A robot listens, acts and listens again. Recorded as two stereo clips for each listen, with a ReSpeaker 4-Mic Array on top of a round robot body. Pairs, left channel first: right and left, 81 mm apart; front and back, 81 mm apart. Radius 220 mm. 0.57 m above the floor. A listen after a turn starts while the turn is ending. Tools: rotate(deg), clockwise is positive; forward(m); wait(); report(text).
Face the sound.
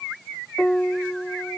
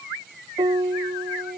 rotate(165)
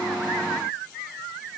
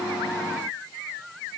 wait()
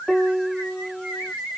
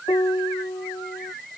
report("Facing the piano.")